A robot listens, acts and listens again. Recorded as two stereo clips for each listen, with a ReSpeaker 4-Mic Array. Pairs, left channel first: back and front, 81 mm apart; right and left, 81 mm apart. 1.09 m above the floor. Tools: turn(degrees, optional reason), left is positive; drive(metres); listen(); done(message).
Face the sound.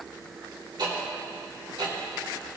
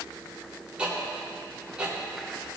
turn(degrees=15, reason="The ticking: 15° left.")
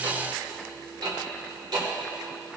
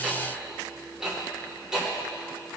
turn(degrees=10, reason="The ticking is now 10° left.")
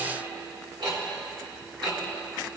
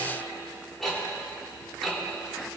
done("Found it: ticking, straight ahead.")